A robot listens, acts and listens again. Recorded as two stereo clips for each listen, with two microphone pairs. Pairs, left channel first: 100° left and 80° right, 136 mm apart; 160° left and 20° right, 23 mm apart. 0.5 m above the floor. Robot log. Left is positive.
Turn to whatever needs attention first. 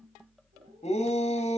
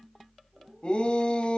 note: The shout: 135° left.
cmd yaw +135
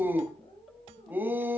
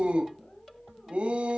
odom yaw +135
end: Facing the shout, 2 to 4 m away.